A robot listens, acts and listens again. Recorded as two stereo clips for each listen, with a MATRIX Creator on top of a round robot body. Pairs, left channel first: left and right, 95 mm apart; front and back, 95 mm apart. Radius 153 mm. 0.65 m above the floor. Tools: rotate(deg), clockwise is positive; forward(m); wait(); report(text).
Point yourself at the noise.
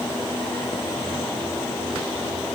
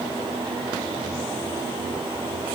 wait()
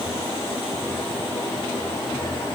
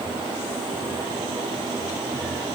wait()
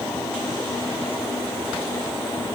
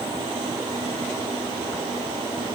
report("I can't make out anything.")